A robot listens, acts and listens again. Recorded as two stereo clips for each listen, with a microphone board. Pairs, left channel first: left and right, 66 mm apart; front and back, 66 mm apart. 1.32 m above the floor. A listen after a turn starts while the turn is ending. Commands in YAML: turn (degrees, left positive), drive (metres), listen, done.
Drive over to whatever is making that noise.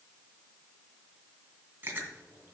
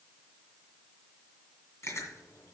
turn: -40
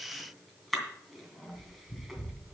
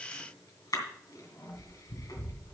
drive: 1.0
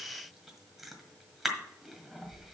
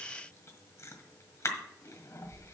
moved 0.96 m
drive: 1.0
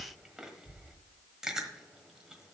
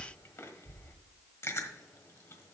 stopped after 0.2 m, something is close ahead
turn: -15
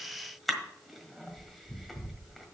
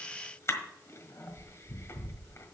done: "Arrived at the chewing, straight ahead."